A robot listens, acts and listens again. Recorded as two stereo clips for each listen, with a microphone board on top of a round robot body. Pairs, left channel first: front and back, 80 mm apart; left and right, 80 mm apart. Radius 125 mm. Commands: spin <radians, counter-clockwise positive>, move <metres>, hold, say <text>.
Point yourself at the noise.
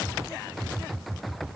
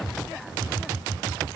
hold
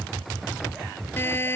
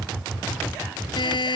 spin 1.13
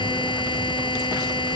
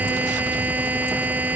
spin -0.35
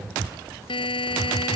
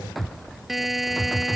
say Facing the buzzer.